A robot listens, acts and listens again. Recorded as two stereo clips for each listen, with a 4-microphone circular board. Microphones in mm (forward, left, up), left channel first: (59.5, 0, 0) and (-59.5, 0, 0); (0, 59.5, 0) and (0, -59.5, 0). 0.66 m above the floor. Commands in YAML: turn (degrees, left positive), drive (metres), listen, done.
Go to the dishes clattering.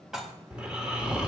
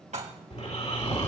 turn: -95
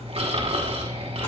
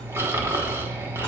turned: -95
listen: true
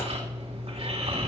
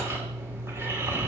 listen: true
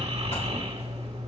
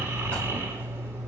done: "Facing where the dishes clattering came from. I can't hear it now. I did not reach it."